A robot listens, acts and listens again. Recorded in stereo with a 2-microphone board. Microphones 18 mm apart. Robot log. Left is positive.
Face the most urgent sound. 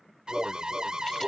note: The alarm: about 50° right or 130° right.
cmd yaw -50
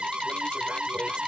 note: So it is at 80° right.
cmd yaw -80
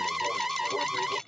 note: The alarm is now 15° right.
cmd yaw -15
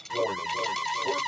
end: Facing the alarm.